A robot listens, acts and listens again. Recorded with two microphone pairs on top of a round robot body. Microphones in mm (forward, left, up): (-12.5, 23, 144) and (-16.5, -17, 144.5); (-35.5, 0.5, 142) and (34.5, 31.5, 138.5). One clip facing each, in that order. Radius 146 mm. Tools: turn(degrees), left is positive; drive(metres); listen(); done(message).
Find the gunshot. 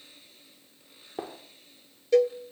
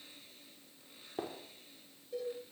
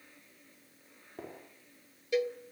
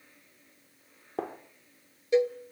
turn(degrees=15)
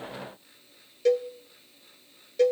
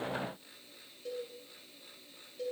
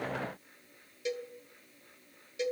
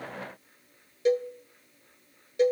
done("I heard a gunshot from this way, but can't make it out now.")